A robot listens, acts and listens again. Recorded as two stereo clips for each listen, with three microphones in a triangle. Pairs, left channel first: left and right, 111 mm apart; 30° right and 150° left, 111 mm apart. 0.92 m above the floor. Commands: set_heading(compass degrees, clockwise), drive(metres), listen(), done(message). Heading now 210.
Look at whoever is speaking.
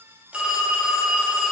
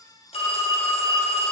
listen()
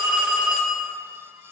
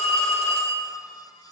listen()
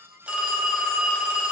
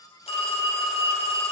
done("I can't make out anyone speaking to turn to.")